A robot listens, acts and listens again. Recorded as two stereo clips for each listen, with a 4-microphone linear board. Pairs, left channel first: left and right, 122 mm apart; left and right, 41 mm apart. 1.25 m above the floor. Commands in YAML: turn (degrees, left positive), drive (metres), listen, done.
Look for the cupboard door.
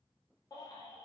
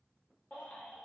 listen: true
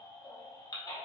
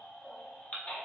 listen: true
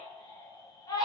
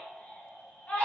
done: "I can't make out a cupboard door, only a baby crying."